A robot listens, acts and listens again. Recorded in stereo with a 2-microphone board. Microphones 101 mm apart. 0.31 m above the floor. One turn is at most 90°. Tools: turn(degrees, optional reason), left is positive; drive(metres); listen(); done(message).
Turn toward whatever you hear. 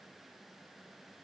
listen()
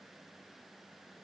listen()
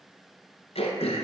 turn(degrees=90)
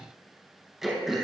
done("Found it: throat clearing, straight ahead, 1 to 2 m away.")